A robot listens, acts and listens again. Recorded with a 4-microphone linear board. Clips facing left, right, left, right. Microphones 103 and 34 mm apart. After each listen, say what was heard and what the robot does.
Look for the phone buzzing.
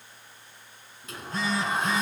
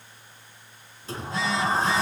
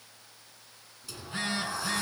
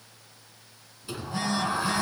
The phone buzzing: about 45° left or 135° left. Turn 45° left.
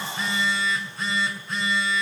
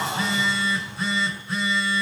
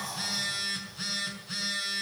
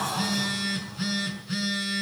Facing the phone buzzing.